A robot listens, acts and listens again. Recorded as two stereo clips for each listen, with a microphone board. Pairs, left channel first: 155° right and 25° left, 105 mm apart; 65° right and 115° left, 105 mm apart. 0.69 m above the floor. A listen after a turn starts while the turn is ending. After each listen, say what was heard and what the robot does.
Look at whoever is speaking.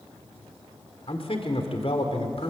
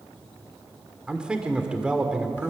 The man speaking: 165° right. Turn 165° right.
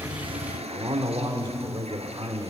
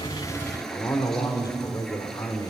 The man speaking is now 15° right. Turn 15° right.
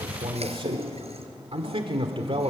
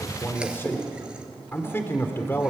Facing the man speaking.